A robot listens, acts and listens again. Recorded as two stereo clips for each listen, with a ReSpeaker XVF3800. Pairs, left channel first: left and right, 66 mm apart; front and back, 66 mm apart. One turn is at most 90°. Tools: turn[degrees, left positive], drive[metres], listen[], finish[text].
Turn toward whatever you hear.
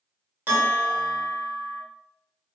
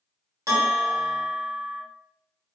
Thought: The bell: 150° right.
Action: turn[-90]
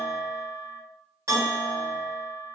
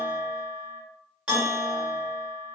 Thought: The bell is now 105° right.
Action: turn[-90]
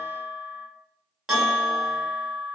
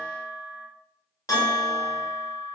Thought: The bell is now 10° right.
Action: turn[-10]
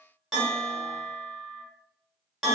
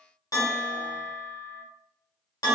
Action: finish[Facing the bell, 1 to 2 m away.]